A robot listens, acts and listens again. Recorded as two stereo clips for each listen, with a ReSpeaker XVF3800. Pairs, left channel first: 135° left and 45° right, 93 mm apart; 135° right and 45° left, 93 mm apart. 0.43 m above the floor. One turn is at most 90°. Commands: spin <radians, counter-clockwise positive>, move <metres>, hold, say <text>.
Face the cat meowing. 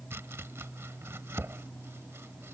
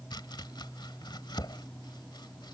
hold
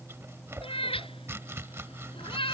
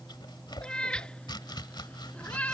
spin 1.57
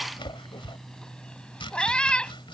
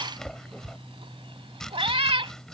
spin 0.96
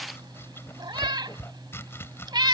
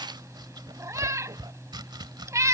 spin -0.17
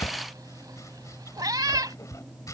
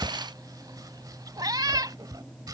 say Facing the cat meowing.